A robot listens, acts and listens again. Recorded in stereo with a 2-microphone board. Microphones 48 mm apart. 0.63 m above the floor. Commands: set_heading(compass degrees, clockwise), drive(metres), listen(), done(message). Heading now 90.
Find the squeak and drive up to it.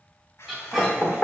set_heading(120)
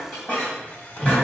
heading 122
set_heading(97)
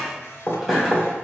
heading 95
drive(1.0)
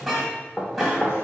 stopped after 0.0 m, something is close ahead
done("Blocked. The squeak is further on, straight ahead.")